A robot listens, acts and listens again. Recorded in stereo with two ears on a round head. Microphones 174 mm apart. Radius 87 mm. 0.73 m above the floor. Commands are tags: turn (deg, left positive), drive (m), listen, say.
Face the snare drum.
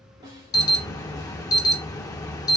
<turn deg="-20"/>
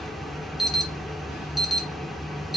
<listen/>
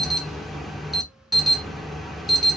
<listen/>
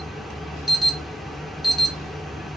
<say>I heard a snare drum, but can't make it out now. It was about straight ahead or 140° right.</say>